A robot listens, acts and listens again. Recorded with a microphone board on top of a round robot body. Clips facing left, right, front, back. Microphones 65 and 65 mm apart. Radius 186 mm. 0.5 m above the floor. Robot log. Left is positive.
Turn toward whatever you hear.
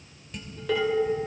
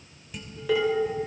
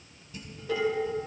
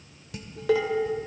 note: The dishes clattering: 175° right.
cmd yaw -175
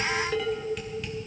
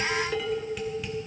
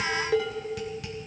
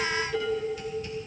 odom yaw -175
end: Facing the dishes clattering, 1 to 2 m away.